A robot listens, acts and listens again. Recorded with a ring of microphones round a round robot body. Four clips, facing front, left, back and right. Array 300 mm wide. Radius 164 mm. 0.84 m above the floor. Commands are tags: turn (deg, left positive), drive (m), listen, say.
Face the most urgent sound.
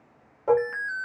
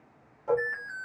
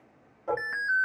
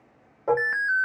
<turn deg="-95"/>
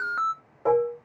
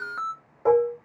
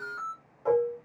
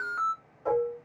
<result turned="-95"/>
<turn deg="10"/>
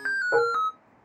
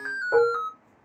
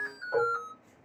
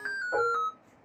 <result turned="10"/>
<say>Facing the alarm.</say>